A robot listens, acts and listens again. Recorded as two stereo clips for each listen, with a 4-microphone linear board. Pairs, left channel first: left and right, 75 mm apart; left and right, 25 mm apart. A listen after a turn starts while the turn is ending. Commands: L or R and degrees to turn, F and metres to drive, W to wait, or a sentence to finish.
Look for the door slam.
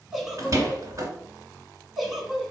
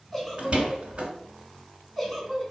R45
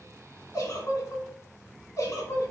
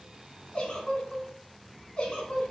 W
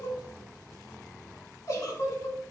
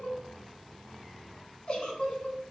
I heard a door slam, but can't make it out now. It was about straight ahead or 90° right.